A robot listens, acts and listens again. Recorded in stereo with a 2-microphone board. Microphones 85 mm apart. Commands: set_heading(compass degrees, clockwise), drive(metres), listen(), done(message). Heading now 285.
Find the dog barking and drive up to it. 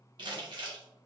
listen()
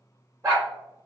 set_heading(320)
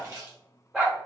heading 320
drive(1.0)
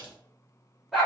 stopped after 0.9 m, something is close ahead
done("Arrived at the dog barking, straight ahead.")